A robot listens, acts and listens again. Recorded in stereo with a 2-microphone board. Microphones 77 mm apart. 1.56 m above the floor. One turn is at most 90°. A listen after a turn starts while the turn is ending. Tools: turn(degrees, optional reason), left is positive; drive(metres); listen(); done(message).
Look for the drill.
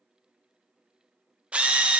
turn(degrees=-15, reason="The drill: about 15° right or 165° right.")
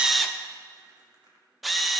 done("Found it: a drill, straight ahead.")